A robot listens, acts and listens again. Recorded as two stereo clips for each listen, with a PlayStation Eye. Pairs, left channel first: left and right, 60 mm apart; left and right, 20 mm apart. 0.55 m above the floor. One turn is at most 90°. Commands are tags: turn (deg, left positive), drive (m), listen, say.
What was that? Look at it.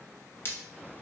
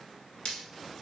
<turn deg="40"/>
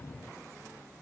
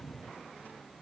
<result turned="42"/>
<listen/>
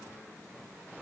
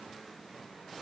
<say>I heard breaking glass, but can't make it out now. It was about straight ahead or 95° left.</say>